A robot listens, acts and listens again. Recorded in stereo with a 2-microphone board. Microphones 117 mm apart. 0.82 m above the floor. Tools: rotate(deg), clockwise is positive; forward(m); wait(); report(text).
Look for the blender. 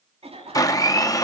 rotate(-30)
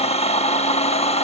rotate(-115)
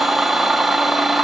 report("Facing the blender, under 1 m away.")